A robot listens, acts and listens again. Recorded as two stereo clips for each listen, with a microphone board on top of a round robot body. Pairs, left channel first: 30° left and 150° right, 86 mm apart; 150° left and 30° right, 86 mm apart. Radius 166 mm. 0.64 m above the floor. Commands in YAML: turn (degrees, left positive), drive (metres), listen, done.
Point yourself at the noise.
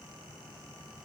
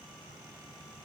listen: true
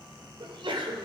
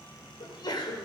turn: -170
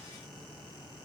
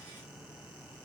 done: "I heard a sneeze from this way, but can't make it out now."